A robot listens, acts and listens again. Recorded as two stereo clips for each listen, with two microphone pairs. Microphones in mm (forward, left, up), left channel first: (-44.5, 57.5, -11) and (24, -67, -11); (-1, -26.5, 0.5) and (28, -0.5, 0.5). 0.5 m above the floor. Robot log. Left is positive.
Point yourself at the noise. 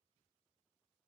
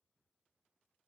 cmd idle
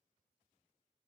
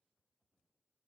cmd idle
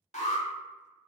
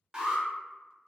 note: The alarm: 105° left.
cmd yaw +105
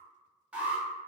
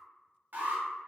note: The alarm is now 15° left.
cmd yaw +15
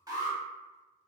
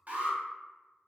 end: Found it: an alarm, straight ahead.